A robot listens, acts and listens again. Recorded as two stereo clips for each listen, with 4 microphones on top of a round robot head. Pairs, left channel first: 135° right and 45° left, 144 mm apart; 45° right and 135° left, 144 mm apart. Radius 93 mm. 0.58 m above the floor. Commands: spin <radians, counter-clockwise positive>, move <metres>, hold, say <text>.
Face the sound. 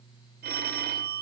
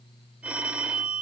spin 0.96
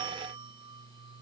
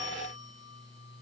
hold
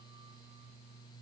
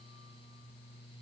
hold
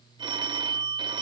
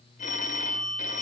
spin -0.26
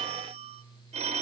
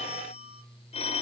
say Facing the phone ringing.